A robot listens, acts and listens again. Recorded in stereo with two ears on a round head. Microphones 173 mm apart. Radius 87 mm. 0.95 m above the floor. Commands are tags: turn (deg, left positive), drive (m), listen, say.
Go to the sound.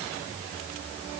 <listen/>
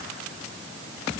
<listen/>
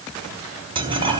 <turn deg="-25"/>
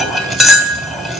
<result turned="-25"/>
<drive m="1.0"/>
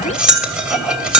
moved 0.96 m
<drive m="1.0"/>
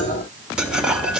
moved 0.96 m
<listen/>
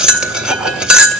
<drive m="1.0"/>
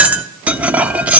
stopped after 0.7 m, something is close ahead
<say>Arrived at the cutlery clinking, straight ahead.</say>